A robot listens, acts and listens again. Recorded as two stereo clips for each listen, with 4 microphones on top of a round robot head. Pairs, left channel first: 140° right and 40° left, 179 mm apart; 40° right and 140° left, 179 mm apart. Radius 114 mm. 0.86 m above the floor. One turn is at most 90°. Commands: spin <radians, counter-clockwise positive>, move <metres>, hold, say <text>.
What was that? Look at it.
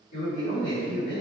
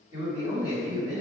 spin -1.57
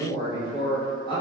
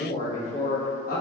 spin -1.31
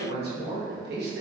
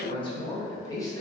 spin 0.61
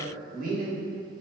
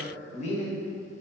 spin 0.17
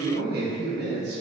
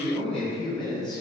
spin 0.44
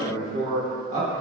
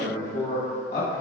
say Facing the man speaking.